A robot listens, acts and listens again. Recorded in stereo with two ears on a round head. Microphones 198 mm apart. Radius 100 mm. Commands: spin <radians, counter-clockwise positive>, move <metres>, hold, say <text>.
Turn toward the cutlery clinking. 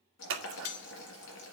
spin 1.57
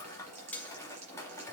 say Facing the cutlery clinking, 1 to 2 m away.